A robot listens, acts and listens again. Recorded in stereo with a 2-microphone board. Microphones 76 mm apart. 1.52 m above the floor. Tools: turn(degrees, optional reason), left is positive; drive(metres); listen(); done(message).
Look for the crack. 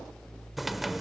turn(degrees=-30)
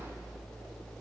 listen()
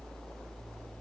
done("I heard a crack, but can't make it out now. It was about 25° left or 145° right.")